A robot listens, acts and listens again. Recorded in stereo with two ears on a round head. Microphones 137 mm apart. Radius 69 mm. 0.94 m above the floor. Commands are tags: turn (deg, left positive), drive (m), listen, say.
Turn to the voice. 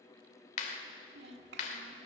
<turn deg="-90"/>
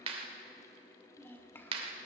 <turn deg="15"/>
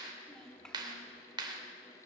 <say>Found it: a child speaking, straight ahead, 2 to 4 m away.</say>